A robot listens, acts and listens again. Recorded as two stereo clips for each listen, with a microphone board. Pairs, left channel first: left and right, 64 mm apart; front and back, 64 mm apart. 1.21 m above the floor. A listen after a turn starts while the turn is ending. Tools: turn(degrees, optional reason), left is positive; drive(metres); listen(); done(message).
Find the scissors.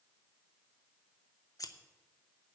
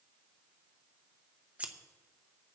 turn(degrees=110, reason="The scissors: 110° left.")
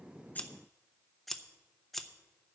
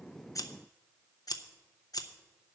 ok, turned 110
done("Found it: scissors, straight ahead, under 1 m away.")